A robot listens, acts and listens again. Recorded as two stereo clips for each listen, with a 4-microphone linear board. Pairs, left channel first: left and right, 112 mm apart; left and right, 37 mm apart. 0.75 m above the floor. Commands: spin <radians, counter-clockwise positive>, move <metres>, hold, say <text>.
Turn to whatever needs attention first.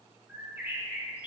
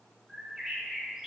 hold
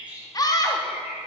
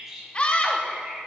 spin 0.61
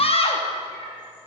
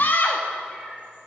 spin 1.83
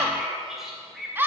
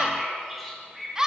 spin -0.35
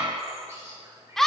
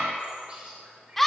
say Found it: a scream, straight ahead, under 1 m away.